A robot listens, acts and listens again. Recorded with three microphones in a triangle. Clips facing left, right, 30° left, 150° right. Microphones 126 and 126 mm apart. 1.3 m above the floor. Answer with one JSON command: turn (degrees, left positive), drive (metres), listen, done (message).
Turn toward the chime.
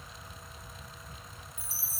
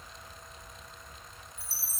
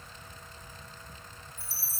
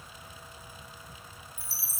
{"done": "Facing the chime."}